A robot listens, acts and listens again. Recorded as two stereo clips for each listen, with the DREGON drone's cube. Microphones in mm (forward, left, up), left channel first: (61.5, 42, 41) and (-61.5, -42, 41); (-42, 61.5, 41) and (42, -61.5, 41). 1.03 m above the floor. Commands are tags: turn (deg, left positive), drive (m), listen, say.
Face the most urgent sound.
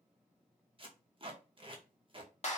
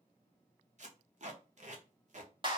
<listen/>
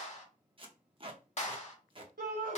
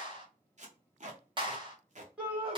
<turn deg="-135"/>
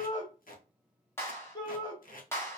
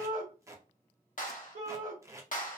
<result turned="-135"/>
<turn deg="-30"/>
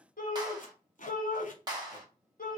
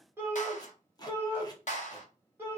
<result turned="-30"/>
<turn deg="20"/>
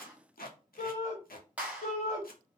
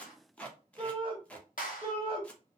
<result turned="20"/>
<say>Facing the shout, 1 to 2 m away.</say>